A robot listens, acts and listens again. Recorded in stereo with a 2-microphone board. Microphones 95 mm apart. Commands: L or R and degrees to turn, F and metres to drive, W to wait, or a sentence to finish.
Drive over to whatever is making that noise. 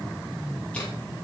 W
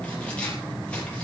L30
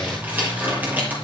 R20
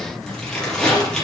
F1.0
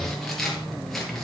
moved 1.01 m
F1.0
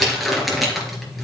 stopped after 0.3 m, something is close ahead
Something is in my way. I am facing the crumpling but have not reached it.